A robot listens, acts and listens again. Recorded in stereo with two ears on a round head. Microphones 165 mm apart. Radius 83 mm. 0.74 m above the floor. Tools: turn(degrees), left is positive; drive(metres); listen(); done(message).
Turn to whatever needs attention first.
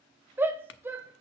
turn(degrees=-30)
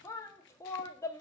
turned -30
turn(degrees=20)
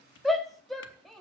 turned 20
done("Found it: a shout, straight ahead.")